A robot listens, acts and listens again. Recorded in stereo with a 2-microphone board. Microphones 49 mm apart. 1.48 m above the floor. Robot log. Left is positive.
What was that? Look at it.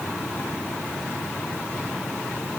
cmd idle
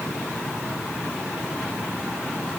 cmd idle
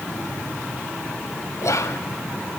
cmd yaw +90
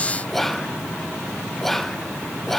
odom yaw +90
note: So it is at 10° left.
cmd yaw +10
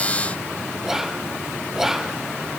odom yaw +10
end: Facing the whispering, under 1 m away.